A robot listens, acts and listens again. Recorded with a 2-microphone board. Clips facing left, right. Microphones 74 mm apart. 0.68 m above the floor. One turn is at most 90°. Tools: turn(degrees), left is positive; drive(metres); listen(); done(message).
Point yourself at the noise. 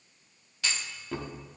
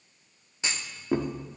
turn(degrees=-20)
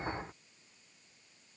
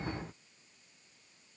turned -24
listen()
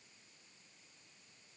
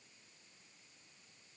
done("I heard a clunk, but can't make it out now. It was about 5° left or 135° right.")